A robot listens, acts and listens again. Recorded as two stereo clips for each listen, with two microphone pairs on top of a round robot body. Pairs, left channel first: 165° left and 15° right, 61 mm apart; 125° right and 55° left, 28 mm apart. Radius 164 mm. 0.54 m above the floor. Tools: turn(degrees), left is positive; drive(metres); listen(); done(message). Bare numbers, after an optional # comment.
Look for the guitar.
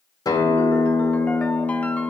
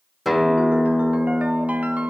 # The guitar: 145° left.
turn(145)
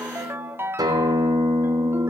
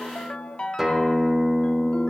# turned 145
# The guitar is now 20° right.
turn(-20)
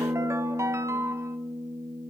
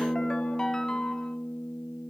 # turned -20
# The guitar is now 10° right.
turn(-10)
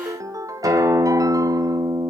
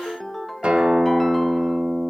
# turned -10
# The guitar is now 10° left.
turn(10)
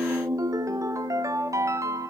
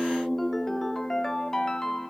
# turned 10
done("Facing the guitar.")